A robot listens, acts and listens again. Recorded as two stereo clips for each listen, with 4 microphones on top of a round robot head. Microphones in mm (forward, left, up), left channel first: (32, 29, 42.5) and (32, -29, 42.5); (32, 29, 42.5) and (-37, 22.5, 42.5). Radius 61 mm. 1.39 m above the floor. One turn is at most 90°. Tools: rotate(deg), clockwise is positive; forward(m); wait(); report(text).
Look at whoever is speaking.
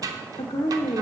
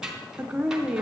rotate(-90)
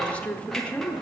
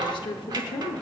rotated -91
rotate(-20)
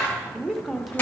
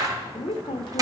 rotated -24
report("Facing the woman speaking, under 1 m away.")